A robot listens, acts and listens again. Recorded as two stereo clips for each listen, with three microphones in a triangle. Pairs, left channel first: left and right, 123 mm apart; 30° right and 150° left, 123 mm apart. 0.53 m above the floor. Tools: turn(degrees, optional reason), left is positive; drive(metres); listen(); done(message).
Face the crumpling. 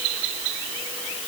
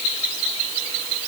listen()
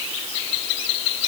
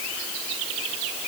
listen()
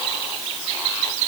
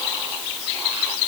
done("I can't make out crumpling to turn to.")